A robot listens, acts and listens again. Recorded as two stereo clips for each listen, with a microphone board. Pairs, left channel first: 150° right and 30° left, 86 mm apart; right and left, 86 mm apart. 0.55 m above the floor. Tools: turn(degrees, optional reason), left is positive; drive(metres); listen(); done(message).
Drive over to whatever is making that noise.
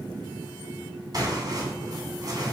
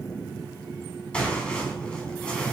turn(degrees=-10, reason="The tearing paper: 10° right.")
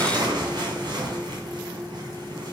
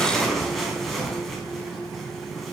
drive(metres=1.0)
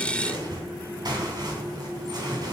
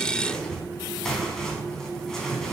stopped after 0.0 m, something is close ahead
done("Something is in my way. I am facing the tearing paper but have not reached it.")